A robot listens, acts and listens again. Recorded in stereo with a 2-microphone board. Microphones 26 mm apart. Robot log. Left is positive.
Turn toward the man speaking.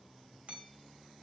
cmd idle
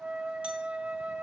cmd idle
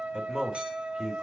note: The man speaking: about 20° right or 160° right.
cmd yaw -20
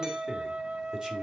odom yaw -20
cmd idle
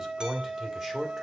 note: The man speaking: about 15° right or 165° right.
cmd yaw -15
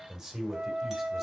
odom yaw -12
note: The man speaking: about 25° right or 155° right.
cmd yaw -25
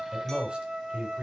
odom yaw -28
note: So it is at 130° right.
cmd yaw -130
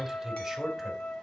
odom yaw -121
note: The man speaking is now 10° right.
cmd yaw -10
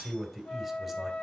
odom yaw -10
end: Found it: a man speaking, straight ahead.